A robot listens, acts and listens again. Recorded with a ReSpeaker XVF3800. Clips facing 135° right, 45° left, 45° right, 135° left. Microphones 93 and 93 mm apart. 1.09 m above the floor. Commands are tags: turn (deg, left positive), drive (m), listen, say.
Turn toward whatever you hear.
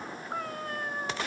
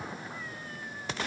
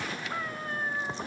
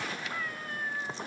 <turn deg="-100"/>
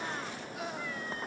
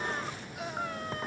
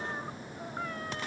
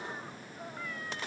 <listen/>
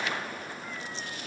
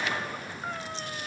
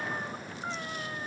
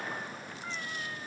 <turn deg="10"/>
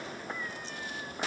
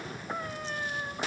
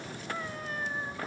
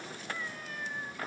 <say>Found it: a cat meowing, straight ahead.</say>